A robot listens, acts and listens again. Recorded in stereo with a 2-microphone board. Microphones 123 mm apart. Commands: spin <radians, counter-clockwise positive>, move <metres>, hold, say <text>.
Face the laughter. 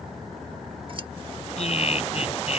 spin 1.05
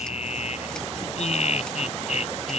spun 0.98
spin 1.13
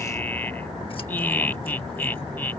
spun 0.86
spin 0.26
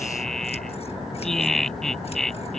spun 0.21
say Facing the laughter.